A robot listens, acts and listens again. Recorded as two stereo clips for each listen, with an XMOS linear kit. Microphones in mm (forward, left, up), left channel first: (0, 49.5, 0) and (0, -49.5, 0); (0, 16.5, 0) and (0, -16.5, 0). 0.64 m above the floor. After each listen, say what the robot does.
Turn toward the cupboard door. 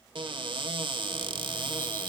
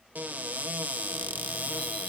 Turn 60° right.
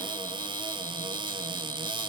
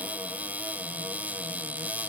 Turn 60° right.
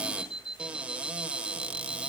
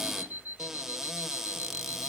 Turn 15° right.
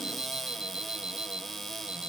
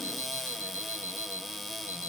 Facing the cupboard door.